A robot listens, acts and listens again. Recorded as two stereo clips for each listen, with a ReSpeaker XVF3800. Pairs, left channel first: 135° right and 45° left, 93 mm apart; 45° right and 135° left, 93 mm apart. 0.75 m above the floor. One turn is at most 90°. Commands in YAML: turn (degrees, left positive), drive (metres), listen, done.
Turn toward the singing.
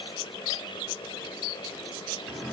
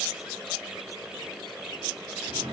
listen: true
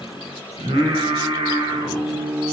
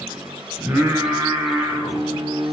turn: 65
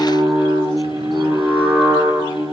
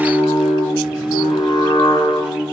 turn: -10
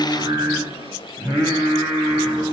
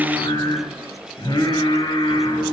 done: "Found it: singing, straight ahead, over 4 m away."